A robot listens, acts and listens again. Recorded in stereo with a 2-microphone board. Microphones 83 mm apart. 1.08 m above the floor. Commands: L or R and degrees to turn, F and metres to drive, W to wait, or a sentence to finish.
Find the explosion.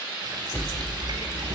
L25
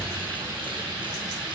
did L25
W
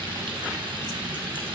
I heard an explosion, but can't make it out now. It was about straight ahead or 130° left.